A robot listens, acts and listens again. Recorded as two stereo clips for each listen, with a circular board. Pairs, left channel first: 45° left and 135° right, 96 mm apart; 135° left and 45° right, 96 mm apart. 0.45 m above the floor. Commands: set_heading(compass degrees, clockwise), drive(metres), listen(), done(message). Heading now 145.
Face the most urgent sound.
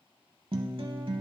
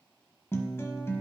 listen()
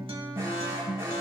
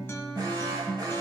set_heading(230)
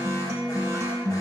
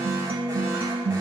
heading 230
listen()
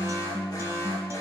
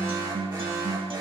done("Facing the alarm.")